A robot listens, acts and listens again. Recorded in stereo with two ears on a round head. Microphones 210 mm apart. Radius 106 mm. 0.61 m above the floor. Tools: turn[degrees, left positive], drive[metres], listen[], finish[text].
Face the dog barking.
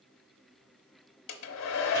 Action: listen[]
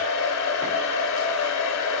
Action: listen[]
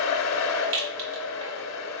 Action: finish[I can't make out a dog barking, only a hair dryer and a rattle.]